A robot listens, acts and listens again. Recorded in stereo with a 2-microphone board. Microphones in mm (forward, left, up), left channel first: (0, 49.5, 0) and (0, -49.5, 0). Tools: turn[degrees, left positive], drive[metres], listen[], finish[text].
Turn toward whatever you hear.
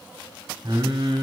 Thought: The singing: about 60° right or 120° right.
Action: turn[-60]
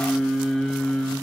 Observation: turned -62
Action: finish[Found it: singing, straight ahead.]